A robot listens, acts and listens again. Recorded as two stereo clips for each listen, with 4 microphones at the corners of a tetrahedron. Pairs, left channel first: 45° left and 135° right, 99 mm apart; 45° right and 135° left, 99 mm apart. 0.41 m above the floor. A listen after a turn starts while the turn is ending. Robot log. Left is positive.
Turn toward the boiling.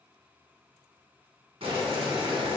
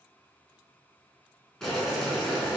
note: The boiling: 130° right.
cmd yaw -130
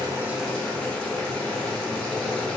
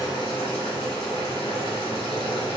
note: The boiling is now 35° right.
cmd yaw -35
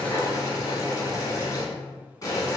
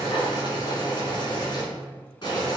end: Found it: boiling, straight ahead.